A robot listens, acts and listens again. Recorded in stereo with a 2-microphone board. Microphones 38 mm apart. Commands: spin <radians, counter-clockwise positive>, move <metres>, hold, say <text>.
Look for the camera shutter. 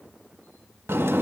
hold
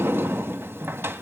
hold
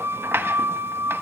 say I can't make out a camera shutter to turn to.